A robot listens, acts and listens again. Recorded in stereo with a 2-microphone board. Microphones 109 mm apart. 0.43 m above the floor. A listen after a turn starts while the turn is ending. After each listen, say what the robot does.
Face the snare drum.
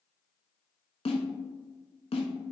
Turn 90° left.
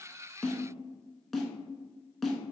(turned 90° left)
Found it: a snare drum, straight ahead.